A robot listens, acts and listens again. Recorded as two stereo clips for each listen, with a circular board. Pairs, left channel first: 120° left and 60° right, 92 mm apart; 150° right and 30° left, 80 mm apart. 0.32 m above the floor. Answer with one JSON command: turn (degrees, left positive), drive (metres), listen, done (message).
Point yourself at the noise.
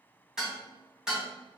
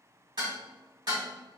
{"turn": 20}
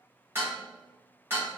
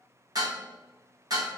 {"done": "Facing the dishes clattering, 1 to 2 m away."}